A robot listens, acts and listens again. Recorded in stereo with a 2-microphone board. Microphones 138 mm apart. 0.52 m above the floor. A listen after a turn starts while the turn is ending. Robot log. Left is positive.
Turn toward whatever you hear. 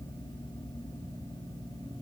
cmd idle
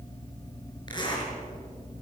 note: The zipper: about 35° left or 145° left.
cmd yaw +35
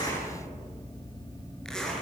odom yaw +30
end: Facing the zipper, over 4 m away.